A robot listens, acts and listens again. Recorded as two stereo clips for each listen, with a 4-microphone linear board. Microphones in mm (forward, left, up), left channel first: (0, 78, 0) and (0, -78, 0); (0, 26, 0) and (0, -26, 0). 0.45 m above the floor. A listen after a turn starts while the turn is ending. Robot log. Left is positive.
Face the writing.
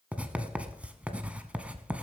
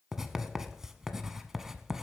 cmd yaw -30
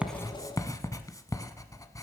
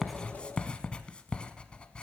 note: So it is at 20° left.
cmd yaw +20
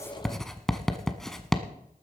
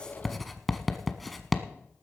end: Facing the writing.